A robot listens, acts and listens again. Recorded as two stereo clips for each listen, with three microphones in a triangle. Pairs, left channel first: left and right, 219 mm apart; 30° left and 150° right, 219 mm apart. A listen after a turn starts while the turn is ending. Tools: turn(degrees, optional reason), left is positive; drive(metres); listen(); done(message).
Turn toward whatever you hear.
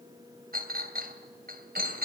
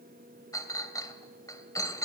turn(degrees=-45, reason="The clink: 45° right.")
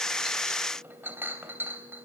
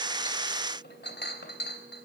turn(degrees=-10, reason="The clink is now 10° right.")
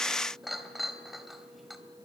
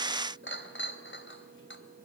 done("Found it: a clink, straight ahead, 2 to 4 m away.")